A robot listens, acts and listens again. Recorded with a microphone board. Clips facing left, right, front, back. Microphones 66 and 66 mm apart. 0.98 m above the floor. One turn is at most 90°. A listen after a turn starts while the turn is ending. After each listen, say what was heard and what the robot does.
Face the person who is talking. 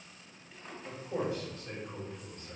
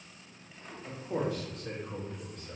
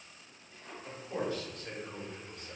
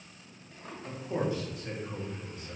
The man speaking: 90° right. Turn 90° right.
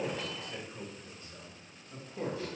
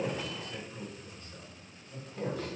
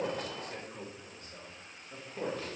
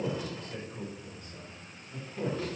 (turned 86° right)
The man speaking is now 25° left. Turn 25° left.
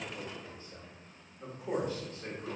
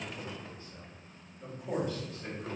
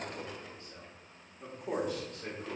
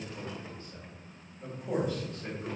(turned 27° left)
The man speaking is now 15° left. Turn 15° left.
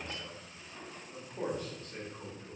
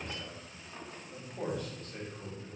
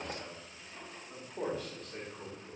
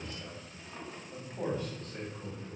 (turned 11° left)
Found it: a man speaking, straight ahead.